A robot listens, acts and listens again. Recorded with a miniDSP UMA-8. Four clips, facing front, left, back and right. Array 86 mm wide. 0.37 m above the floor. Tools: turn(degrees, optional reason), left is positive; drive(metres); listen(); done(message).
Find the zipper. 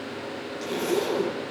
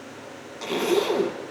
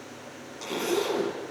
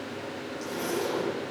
turn(degrees=90, reason="The zipper: 90° left.")
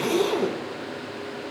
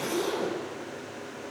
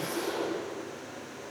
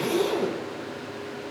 turn(degrees=-20, reason="The zipper is now 20° right.")
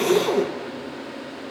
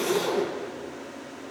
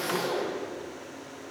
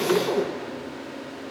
done("Facing the zipper.")